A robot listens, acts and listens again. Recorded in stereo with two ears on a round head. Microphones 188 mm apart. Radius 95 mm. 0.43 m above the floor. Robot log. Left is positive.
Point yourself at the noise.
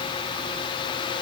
cmd idle
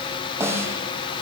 cmd yaw -30
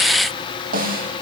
note: So it is at 135° right.
cmd yaw -135
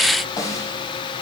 note: The snare drum is now 15° left.
cmd yaw +15
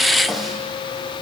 end: Found it: a snare drum, straight ahead, 2 to 4 m away.